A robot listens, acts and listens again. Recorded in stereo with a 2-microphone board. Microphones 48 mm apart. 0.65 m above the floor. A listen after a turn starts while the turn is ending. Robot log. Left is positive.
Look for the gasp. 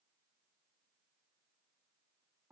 cmd idle
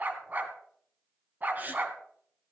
note: The gasp: about 40° right or 140° right.
cmd yaw -40
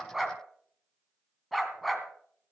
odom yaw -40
cmd idle
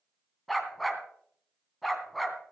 end: I heard a gasp, but can't make it out now. It was about straight ahead or 100° right.